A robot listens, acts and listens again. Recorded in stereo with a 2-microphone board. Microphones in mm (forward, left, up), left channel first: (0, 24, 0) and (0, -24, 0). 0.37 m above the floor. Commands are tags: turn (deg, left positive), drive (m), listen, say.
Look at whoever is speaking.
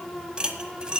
<listen/>
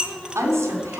<turn deg="-70"/>
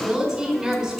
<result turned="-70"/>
<turn deg="-10"/>
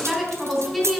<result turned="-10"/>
<say>Facing the woman speaking.</say>